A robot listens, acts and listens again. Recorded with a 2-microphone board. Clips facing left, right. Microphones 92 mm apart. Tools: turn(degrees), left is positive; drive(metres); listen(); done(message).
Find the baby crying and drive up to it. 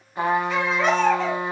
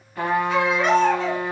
turn(degrees=35)
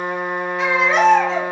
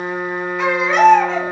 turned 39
drive(metres=1.0)
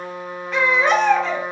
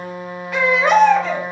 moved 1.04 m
drive(metres=1.0)
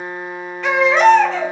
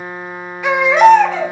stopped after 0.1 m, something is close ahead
turn(degrees=-10)
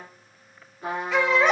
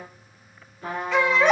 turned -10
done("Arrived at the baby crying, straight ahead.")